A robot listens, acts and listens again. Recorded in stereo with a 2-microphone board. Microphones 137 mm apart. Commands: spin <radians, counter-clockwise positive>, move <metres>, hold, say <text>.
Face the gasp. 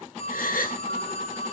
spin 1.57
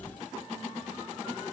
say Facing where the gasp came from. I can't hear it now.